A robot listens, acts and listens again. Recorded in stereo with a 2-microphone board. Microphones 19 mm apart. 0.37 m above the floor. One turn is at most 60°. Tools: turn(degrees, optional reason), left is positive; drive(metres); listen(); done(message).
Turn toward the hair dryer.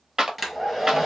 turn(degrees=-15, reason="The hair dryer: about 15° right or 165° right.")
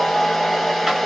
done("Facing the hair dryer.")